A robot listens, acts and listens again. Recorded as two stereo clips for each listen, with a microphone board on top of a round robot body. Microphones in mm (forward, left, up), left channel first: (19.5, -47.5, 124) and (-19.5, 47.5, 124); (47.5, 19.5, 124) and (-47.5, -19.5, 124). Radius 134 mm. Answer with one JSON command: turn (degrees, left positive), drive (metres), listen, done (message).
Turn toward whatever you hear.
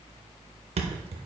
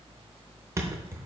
{"turn": 140}
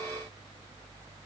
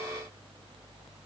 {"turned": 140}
{"done": "I heard a thud from this way, but can't make it out now."}